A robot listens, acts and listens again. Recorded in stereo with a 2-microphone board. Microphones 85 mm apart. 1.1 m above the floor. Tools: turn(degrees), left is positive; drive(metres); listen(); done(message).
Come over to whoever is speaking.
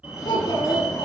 turn(degrees=60)
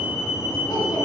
listen()
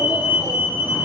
listen()
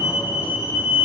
done("I heard a child speaking, but can't make it out now. It was about straight ahead or 60° left. I did not reach it.")